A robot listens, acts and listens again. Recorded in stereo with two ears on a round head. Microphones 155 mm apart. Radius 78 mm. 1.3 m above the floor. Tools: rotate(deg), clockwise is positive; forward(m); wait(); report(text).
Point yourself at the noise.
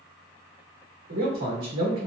rotate(70)
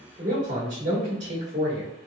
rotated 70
rotate(40)
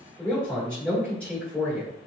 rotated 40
report("Facing the man speaking, 1 to 2 m away.")